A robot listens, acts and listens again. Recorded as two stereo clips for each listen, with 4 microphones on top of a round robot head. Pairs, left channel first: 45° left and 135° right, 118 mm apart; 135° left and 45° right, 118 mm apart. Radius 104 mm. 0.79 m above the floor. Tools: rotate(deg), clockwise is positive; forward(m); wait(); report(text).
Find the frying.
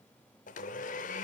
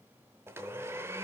wait()
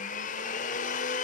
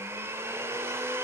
wait()
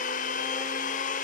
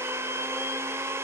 report("I can't make out frying, only a blender.")